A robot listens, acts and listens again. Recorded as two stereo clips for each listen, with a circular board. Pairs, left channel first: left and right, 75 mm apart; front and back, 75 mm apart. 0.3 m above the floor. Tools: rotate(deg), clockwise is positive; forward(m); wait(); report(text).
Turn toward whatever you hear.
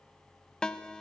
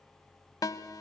rotate(-15)
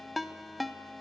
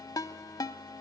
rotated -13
report("Facing the ringtone.")